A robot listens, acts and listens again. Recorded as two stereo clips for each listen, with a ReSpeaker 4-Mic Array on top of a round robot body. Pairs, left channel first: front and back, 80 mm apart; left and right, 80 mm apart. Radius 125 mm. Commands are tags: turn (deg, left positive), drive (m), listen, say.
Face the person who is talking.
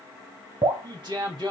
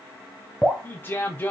<turn deg="155"/>
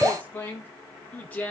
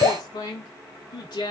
<turn deg="70"/>
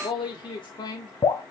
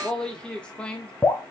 <turn deg="15"/>
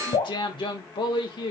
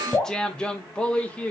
<turn deg="20"/>
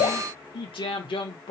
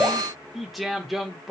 <say>Found it: a man speaking, straight ahead, 2 to 4 m away.</say>